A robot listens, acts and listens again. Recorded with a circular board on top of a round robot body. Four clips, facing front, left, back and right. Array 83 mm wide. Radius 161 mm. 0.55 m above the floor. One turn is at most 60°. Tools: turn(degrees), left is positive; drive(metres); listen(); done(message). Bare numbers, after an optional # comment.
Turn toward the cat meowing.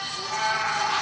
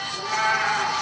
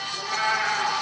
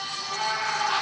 # The cat meowing: 125° left.
turn(60)
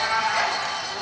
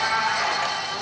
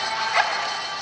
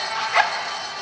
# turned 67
# The cat meowing is now 55° left.
turn(55)
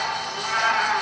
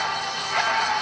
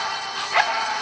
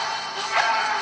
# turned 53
# The cat meowing is now 15° right.
turn(-15)
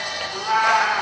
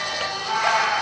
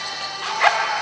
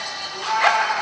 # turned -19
done("Found it: a cat meowing, straight ahead, 2 to 4 m away.")